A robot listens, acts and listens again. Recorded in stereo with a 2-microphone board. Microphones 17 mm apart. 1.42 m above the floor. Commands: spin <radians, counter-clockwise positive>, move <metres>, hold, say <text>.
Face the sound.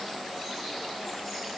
hold
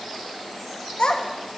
spin 1.05
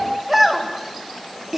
spin -0.61
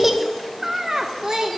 spin -0.87
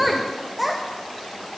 spin -0.17
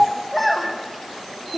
say Facing the child speaking, 1 to 2 m away.